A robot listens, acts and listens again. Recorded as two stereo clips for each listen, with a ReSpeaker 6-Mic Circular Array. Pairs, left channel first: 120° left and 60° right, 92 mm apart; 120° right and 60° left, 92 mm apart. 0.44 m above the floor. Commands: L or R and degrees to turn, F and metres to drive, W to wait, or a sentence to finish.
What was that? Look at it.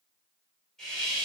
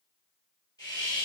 R155
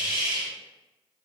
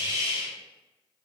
Facing the hiss.